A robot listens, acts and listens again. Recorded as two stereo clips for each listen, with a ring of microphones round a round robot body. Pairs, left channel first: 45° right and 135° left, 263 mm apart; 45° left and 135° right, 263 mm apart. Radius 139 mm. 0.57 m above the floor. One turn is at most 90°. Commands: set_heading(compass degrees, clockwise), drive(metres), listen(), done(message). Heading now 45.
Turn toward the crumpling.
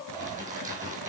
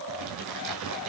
set_heading(135)
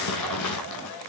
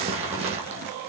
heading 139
set_heading(204)
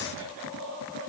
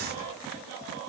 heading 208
listen()
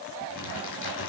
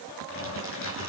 done("Found it: crumpling, straight ahead, 2 to 4 m away.")